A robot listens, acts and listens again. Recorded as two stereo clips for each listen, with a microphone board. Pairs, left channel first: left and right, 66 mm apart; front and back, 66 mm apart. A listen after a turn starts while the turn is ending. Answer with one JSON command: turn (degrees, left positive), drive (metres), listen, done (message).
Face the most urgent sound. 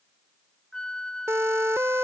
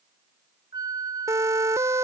{"turn": -135}
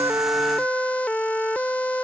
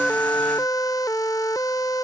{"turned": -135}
{"turn": 20}
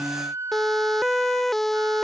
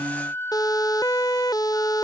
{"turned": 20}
{"done": "Facing the siren."}